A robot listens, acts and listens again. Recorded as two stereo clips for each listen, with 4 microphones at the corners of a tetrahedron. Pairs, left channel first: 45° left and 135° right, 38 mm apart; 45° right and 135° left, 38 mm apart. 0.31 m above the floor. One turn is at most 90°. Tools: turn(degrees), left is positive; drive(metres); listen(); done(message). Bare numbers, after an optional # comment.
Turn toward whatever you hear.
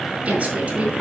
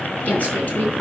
# The woman speaking: 90° right.
turn(-90)
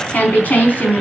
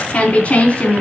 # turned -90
done("Found it: a woman speaking, straight ahead, 2 to 4 m away.")